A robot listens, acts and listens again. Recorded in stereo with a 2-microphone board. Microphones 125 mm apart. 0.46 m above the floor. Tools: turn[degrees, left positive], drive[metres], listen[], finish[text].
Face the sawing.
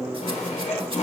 Action: turn[90]
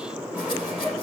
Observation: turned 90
Thought: So it is at 10° right.
Action: turn[-10]
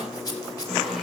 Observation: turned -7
Action: finish[Facing the sawing, 2 to 4 m away.]